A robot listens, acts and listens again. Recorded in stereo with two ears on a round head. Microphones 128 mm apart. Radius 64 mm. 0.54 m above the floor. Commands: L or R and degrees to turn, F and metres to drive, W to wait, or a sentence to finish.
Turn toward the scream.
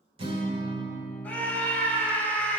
L30
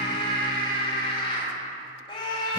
L135
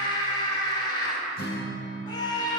L35
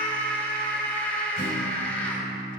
L10
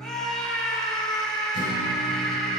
Facing the scream, 1 to 2 m away.